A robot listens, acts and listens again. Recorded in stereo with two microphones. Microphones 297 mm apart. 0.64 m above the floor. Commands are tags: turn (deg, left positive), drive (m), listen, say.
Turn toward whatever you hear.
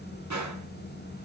<turn deg="-90"/>
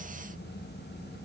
<say>Facing where the gunshot came from. I can't hear it now.</say>